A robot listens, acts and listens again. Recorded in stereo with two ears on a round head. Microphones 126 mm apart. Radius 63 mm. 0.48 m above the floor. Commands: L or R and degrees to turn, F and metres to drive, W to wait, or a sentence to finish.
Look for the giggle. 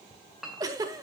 R25
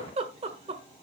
R125
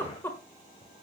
L15
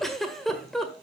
Facing the giggle, 1 to 2 m away.